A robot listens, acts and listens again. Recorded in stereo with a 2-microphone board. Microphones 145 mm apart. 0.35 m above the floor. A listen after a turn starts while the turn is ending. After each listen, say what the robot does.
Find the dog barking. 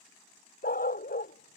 Turn 90° left.
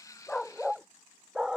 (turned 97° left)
Facing the dog barking.